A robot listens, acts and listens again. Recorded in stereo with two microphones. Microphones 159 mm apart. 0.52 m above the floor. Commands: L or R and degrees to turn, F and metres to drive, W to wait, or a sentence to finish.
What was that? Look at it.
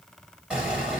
R30
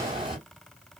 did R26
R150
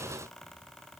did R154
Facing where the explosion came from. I can't hear it now.